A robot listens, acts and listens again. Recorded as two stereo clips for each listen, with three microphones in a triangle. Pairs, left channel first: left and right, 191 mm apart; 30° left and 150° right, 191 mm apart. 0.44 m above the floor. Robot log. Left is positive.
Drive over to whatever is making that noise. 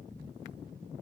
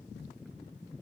cmd idle
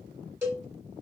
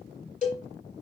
note: The cowbell: 15° right.
cmd yaw -15
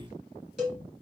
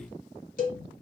cmd fwd 1.0
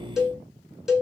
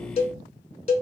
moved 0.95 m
cmd fwd 1.0
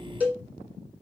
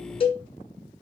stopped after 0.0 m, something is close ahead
note: The cowbell is now 15° right.
cmd yaw -15
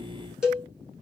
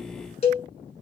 end: I am next to the cowbell.